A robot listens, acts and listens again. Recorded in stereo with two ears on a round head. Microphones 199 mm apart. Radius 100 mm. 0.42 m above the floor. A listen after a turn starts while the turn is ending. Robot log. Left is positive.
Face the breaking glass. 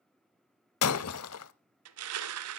cmd yaw +90
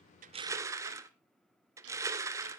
end: Facing where the breaking glass came from. I can't hear it now.